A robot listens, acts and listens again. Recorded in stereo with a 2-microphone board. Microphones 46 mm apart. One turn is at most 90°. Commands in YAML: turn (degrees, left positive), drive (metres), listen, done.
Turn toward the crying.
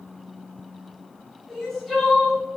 turn: 30
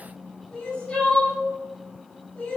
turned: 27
turn: 90
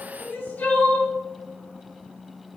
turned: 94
turn: 60
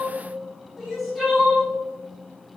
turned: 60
done: "Facing the crying."